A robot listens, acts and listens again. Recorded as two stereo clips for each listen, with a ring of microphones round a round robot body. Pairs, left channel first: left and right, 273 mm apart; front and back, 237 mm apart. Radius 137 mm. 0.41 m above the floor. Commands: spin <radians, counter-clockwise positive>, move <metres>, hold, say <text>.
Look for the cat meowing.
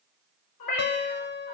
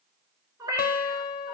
spin 1.83
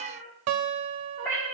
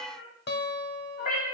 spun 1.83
say Facing the cat meowing, 2 to 4 m away.